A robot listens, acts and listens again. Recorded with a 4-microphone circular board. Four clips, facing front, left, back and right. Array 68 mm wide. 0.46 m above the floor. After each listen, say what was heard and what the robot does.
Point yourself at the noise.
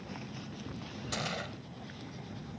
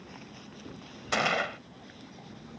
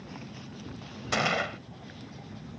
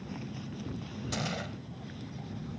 The gunshot: 125° left. Turn 125° left.
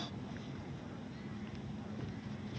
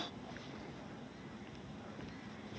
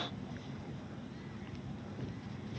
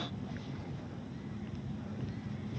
Facing where the gunshot came from. I can't hear it now.